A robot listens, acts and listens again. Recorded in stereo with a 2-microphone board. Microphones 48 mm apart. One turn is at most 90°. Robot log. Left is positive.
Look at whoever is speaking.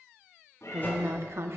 note: The woman speaking: about 60° right or 120° right.
cmd yaw -60
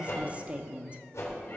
note: So it is at 30° right.
cmd yaw -30
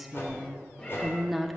end: Found it: a woman speaking, straight ahead, 1 to 2 m away.